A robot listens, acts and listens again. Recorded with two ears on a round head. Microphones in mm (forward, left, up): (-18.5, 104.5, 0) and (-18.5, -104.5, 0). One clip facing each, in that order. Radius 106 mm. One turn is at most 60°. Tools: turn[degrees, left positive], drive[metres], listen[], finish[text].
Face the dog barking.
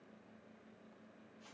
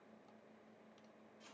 Action: listen[]
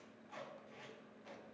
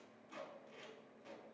Action: listen[]
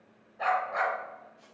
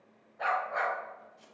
Action: turn[30]
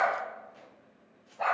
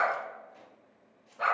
Thought: So it is at 20° right.
Action: turn[-20]
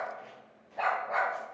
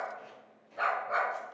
Action: finish[Found it: a dog barking, straight ahead.]